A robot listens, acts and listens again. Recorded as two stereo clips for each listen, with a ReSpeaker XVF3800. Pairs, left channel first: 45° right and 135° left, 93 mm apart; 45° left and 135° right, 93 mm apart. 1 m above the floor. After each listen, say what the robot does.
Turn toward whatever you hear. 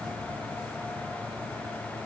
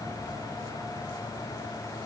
Keep listening.
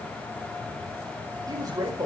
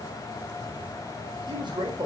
Turn 175° right.
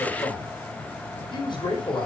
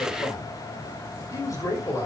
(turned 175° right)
Turn 10° right.
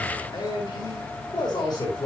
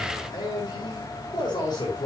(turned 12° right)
Found it: a man speaking, straight ahead.